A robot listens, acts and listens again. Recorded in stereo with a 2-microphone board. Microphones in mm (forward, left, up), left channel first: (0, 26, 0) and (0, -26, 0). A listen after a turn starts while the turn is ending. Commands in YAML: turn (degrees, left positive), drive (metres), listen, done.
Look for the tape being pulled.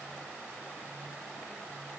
listen: true
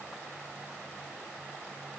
listen: true
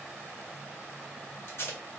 turn: 50
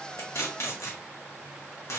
turn: 75
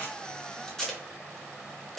turn: 10
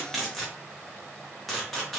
done: "Facing the tape being pulled."